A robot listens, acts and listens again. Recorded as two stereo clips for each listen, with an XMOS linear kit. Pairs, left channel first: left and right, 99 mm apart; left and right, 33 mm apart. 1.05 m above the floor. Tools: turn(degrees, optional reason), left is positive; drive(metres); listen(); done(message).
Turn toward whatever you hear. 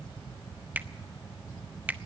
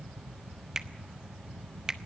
turn(degrees=-15, reason="The finger snap: about 15° right or 165° right.")
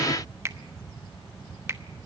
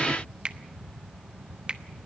turn(degrees=-150, reason="So it is at 150° right.")
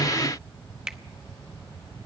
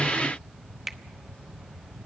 turn(degrees=-10, reason="The finger snap is now 10° right.")
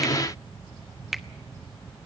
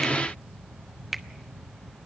done("Facing the finger snap, under 1 m away.")